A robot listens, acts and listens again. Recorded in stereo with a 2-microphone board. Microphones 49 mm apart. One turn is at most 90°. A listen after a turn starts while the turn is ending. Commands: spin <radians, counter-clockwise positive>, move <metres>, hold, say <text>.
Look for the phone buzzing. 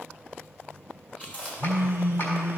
spin -0.96
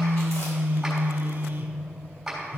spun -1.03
spin -0.96
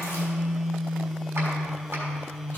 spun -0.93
say Facing the phone buzzing.